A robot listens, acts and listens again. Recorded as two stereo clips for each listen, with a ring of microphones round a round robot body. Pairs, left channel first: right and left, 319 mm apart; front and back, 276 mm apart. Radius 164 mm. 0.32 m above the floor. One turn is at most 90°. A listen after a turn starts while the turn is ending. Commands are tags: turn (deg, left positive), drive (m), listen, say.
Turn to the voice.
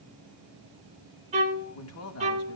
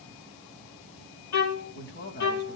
<turn deg="-50"/>
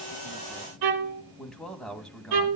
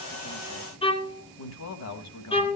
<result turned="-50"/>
<say>Facing the man speaking.</say>